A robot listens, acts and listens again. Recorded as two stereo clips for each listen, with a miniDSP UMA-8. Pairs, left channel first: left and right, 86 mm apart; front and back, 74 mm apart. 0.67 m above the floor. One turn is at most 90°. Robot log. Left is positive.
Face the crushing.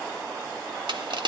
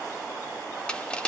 note: The crushing: 75° right.
cmd yaw -75
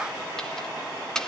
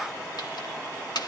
note: The crushing is now 10° left.
cmd yaw +10
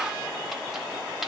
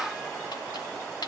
cmd idle
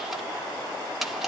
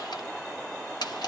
end: Found it: crushing, straight ahead.